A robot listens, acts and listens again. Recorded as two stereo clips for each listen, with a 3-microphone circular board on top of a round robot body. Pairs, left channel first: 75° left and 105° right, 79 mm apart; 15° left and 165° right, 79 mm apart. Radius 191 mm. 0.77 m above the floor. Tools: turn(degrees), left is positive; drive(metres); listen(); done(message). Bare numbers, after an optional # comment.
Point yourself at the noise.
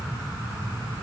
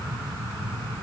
listen()
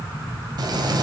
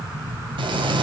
# The frying: 145° right.
turn(-145)
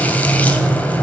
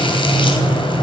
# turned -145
done("Facing the frying.")